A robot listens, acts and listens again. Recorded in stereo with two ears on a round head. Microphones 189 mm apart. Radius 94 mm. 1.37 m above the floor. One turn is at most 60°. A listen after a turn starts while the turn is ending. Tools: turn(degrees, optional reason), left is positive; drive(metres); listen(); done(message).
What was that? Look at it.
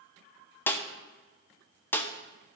turn(degrees=30)
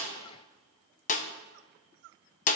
turn(degrees=60, reason="So it is at 140° left.")
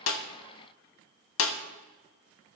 turn(degrees=60, reason="The snare drum is now 70° left.")
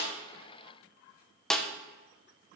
done("Facing the snare drum.")